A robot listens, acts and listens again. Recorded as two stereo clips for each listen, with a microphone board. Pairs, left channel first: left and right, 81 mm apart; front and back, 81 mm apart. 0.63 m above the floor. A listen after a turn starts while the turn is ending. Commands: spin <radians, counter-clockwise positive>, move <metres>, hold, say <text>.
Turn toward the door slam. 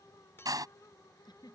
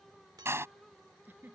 spin -2.18
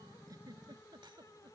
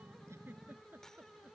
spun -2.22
say I heard a door slam from this way, but can't make it out now.